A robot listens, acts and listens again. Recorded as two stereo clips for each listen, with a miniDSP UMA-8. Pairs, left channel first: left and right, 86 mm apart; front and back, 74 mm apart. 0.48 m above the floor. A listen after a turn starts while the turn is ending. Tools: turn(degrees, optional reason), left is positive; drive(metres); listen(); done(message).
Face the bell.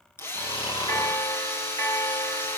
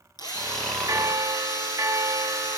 turn(degrees=125, reason="The bell: 125° left.")
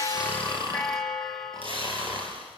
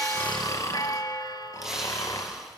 done("Facing the bell.")